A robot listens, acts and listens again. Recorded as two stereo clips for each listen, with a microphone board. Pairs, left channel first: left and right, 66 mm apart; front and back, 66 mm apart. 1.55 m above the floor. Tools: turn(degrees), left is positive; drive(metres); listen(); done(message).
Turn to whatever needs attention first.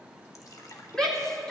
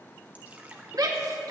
turn(degrees=170)
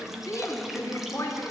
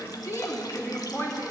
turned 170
turn(degrees=50)
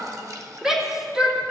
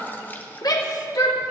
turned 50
done("Facing the shout.")